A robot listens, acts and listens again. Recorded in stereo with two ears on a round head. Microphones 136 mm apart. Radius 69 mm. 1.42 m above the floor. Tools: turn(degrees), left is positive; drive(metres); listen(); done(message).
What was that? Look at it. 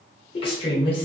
turn(degrees=35)
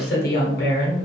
turn(degrees=110)
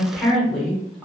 done("Facing the woman speaking, 1 to 2 m away.")